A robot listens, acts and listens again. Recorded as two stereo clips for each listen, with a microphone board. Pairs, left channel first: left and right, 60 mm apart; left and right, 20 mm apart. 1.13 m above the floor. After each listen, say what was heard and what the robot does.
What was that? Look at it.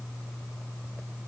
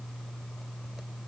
Keep listening.
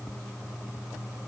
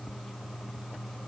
Keep listening.
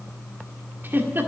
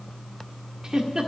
The giggle: about 40° right or 140° right. Turn 40° right.
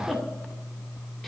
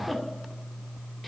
Found it: a giggle, straight ahead.